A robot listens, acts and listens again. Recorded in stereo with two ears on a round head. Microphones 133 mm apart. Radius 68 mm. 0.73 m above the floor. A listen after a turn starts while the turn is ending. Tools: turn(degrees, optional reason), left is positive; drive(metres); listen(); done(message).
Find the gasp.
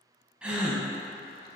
turn(degrees=-30)
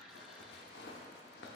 listen()
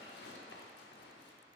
done("I heard a gasp, but can't make it out now. It was about 25° left or 145° right.")